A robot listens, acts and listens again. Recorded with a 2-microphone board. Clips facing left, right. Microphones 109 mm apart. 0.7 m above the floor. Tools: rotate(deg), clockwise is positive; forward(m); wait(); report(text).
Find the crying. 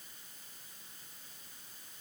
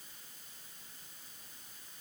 wait()
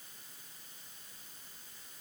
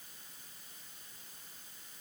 wait()
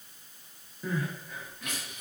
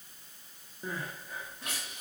rotate(30)
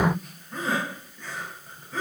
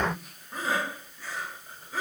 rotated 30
report("Found it: crying, straight ahead, under 1 m away.")